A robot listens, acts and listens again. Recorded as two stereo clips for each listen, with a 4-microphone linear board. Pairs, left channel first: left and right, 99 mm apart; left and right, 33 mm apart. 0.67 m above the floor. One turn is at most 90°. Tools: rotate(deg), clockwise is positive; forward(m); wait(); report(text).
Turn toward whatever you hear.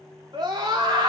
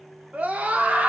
rotate(40)
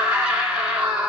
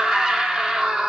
rotate(10)
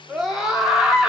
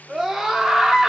report("Found it: a scream, straight ahead.")